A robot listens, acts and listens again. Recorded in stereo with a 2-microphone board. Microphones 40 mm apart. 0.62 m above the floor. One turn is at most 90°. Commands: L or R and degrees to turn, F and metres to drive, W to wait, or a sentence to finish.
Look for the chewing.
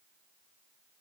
W
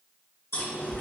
L90
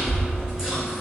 R10
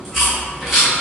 Facing the chewing.